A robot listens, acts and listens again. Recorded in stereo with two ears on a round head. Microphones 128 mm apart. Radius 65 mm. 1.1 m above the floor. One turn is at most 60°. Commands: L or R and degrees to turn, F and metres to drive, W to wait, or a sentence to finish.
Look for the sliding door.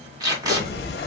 L60
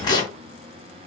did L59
L30
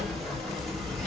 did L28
Facing the sliding door, 1 to 2 m away.